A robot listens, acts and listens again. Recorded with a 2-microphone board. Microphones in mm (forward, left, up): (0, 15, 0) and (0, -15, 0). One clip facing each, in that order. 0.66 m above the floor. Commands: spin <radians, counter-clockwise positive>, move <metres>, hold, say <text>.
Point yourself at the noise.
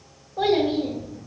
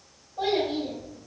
spin 1.05
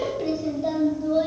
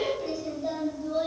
spin 0.26
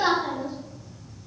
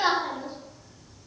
spin -0.44
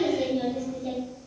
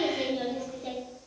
spin -0.70
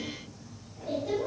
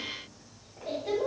spin -0.52
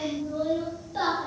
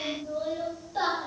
spin 0.17
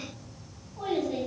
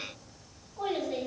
say Facing the child speaking, 1 to 2 m away.